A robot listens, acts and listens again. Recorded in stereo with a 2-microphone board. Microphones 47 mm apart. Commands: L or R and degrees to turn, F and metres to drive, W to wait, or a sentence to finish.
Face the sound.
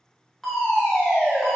L30
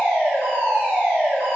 R25
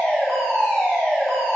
L10
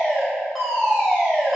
Facing the fire alarm.